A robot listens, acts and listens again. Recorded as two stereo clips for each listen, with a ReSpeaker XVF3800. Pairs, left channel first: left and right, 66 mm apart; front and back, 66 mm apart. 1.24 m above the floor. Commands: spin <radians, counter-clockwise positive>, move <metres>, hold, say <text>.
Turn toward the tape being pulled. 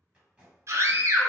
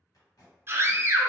spin -0.35
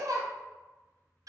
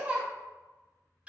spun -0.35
hold
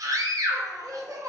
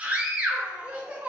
hold
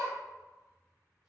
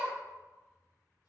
say Facing where the tape being pulled came from. I can't hear it now.